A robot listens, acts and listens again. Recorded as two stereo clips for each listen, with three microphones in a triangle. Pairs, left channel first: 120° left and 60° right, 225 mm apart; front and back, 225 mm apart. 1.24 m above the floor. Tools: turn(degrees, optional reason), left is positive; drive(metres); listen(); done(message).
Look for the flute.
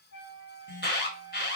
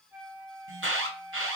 turn(degrees=95, reason="The flute: 95° left.")
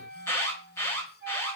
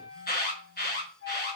turn(degrees=-20, reason="The flute is now 20° right.")
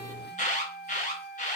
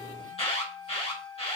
done("Found it: a flute, straight ahead, 1 to 2 m away.")